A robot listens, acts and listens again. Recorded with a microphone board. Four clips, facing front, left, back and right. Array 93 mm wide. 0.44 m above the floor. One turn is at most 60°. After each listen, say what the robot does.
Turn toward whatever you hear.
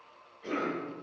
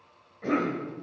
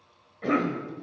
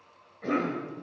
Turn 60° left.
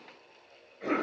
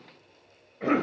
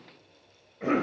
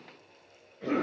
Turn 60° left.
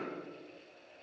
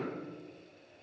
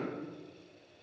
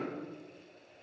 Turn 55° left.
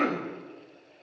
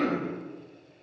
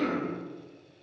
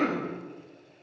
Turn 15° right.
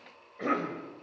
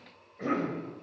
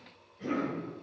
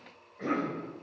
Found it: a cough, straight ahead.